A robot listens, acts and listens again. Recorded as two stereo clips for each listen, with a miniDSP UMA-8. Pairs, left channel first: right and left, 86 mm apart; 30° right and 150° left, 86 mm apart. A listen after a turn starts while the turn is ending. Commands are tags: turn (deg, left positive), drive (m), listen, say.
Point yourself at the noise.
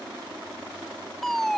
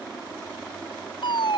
<say>Facing the fire alarm.</say>